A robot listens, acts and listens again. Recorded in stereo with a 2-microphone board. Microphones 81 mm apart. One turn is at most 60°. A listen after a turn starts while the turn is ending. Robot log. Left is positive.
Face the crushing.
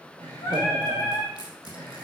note: The crushing: about 55° left or 125° left.
cmd yaw +55
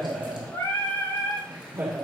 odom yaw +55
cmd idle
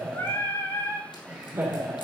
cmd idle
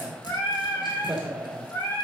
end: I heard crushing, but can't make it out now. It was about straight ahead or 70° left.